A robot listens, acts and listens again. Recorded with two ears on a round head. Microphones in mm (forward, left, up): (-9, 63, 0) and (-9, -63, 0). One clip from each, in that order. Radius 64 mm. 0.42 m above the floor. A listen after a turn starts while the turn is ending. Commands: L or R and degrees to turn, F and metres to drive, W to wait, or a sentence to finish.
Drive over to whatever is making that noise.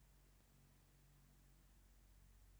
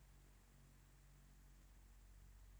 W
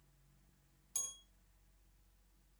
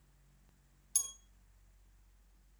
R40
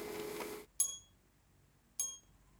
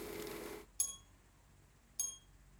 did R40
F1.0
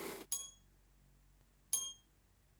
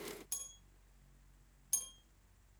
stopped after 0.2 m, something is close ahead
Something is in my way. I am facing the bell but have not reached it.